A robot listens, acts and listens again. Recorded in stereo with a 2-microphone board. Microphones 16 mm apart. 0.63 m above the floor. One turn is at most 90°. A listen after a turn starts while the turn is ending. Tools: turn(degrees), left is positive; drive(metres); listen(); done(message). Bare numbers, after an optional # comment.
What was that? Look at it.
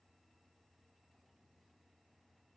listen()
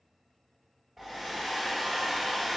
# The hair dryer: about 30° right or 150° right.
turn(-30)
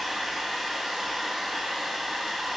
# So it is at 120° right.
turn(-90)
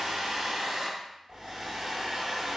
# The hair dryer is now 30° right.
turn(-30)
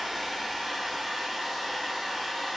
done("Found it: a hair dryer, straight ahead.")